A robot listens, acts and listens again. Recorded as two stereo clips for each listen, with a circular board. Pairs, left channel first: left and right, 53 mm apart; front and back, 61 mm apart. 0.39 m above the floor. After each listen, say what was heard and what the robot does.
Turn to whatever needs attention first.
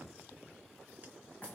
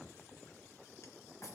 Keep listening.
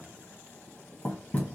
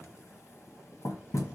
Keep listening.
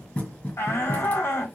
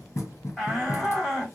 The shout: 90° left. Turn 90° left.
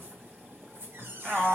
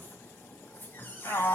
The shout is now 10° left. Turn 10° left.
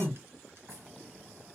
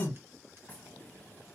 Facing the shout, 2 to 4 m away.